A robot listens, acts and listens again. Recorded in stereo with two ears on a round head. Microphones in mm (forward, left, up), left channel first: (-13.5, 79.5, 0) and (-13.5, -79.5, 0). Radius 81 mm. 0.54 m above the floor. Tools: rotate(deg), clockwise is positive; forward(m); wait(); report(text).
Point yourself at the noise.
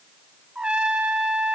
rotate(30)
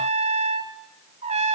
rotate(145)
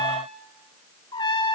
rotate(-25)
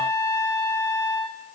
rotate(-15)
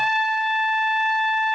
report("Found it: a trumpet, straight ahead.")